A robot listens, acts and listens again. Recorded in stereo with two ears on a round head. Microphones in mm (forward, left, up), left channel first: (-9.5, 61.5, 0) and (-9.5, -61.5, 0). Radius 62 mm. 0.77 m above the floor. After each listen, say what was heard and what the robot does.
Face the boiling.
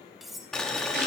Turn 30° left.
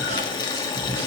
So it is at 140° left. Turn 140° left.
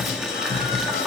Facing the boiling.